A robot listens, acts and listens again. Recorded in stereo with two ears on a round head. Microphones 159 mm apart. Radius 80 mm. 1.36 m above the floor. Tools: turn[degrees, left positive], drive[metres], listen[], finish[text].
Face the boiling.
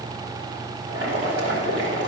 Action: turn[-90]
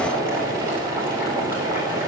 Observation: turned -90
Thought: So it is at 15° right.
Action: turn[-15]
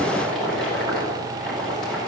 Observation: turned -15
Action: finish[Found it: boiling, straight ahead.]